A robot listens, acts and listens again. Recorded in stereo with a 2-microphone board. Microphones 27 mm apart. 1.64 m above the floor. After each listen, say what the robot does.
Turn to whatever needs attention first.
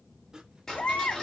Turn 60° left.
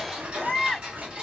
Turn 30° left.
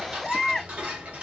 Turn 15° left.
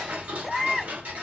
Found it: a baby crying, straight ahead.